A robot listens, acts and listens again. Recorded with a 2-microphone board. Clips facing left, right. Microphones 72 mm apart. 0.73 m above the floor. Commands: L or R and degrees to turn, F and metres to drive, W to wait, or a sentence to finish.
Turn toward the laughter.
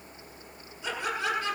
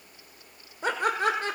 R45
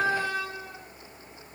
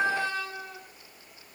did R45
L15
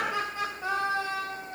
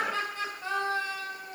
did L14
L20
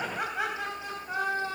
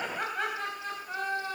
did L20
L10
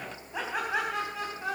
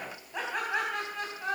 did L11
Facing the laughter, over 4 m away.